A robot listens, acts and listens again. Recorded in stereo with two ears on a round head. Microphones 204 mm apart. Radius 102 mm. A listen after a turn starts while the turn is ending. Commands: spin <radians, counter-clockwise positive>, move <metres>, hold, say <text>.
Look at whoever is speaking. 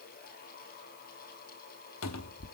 hold
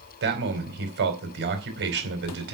spin -0.87
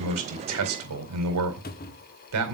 spin -1.40
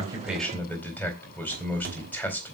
spin 0.17
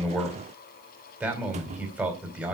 say Found it: a man speaking, straight ahead.